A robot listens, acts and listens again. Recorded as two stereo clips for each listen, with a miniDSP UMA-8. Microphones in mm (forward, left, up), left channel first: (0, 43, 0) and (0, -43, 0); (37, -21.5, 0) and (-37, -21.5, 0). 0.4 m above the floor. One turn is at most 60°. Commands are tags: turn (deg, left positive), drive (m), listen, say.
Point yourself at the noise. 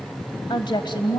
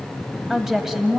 <turn deg="60"/>
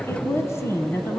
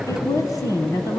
<turn deg="35"/>
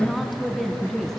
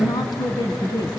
<say>Facing the woman speaking, 2 to 4 m away.</say>